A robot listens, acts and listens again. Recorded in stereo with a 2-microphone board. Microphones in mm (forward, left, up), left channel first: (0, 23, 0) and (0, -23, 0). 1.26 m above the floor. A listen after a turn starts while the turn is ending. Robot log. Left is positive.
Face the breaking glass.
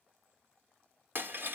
note: The breaking glass: about 50° right or 130° right.
cmd yaw -50
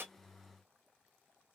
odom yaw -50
cmd idle
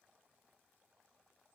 end: I heard breaking glass, but can't make it out now. It was about straight ahead or 80° right.